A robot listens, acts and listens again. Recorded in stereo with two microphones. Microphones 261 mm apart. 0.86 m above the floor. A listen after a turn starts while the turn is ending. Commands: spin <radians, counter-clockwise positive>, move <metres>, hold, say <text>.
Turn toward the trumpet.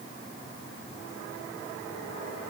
hold
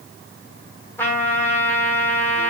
spin 0.52
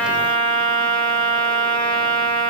spin -0.35
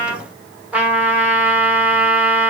spin -0.17
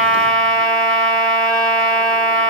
say Found it: a trumpet, straight ahead.